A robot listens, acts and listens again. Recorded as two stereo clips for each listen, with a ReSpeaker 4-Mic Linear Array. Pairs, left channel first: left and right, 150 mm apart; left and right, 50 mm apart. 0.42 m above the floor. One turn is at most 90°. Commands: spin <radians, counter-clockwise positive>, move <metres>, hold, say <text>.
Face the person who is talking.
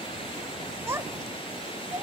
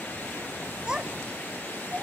spin -0.26
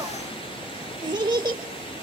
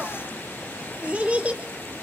spin -1.57
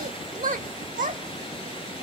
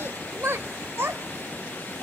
spin -1.57
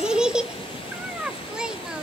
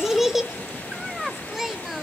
say Facing the child speaking.